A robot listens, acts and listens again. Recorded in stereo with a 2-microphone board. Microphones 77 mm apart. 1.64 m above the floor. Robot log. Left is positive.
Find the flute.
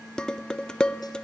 cmd idle
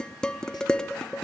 cmd idle
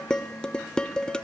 end: I can't make out a flute, only dishes clattering.